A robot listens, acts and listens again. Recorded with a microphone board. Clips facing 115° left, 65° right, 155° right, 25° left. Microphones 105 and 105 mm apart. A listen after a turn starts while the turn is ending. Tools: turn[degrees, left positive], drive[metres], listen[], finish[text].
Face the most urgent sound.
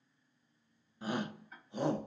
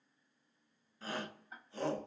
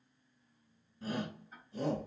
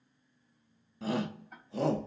Thought: The shout: 35° left.
Action: turn[35]
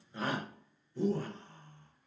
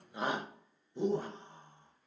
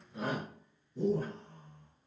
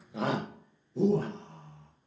Action: finish[Found it: a shout, straight ahead, under 1 m away.]